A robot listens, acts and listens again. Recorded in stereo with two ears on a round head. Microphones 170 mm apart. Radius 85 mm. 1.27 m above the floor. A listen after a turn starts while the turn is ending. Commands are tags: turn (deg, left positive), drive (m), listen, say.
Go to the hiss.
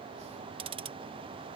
<listen/>
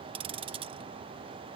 <listen/>
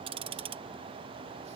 <say>I can't make out a hiss, only ticking.</say>